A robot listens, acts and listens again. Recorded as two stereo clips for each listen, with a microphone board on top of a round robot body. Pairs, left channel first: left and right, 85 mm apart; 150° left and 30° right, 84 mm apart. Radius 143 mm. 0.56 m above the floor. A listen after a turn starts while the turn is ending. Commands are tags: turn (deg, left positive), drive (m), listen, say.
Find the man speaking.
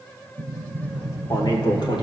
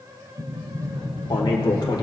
<turn deg="115"/>
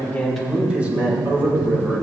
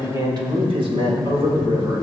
<turn deg="-25"/>
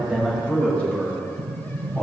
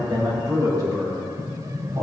<turn deg="10"/>
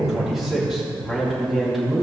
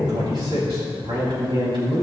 <say>Facing the man speaking, over 4 m away.</say>